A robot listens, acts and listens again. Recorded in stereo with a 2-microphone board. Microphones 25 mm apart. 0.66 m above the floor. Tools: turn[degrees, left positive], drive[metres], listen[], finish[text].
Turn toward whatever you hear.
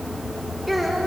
Action: turn[30]
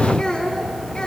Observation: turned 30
Thought: So it is at 145° left.
Action: turn[145]
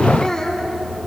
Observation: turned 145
Thought: The child speaking is now 25° left.
Action: turn[25]
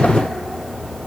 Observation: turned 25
Action: listen[]
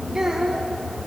Thought: The child speaking is now 20° right.
Action: turn[-20]
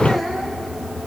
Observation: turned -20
Action: finish[Facing the child speaking.]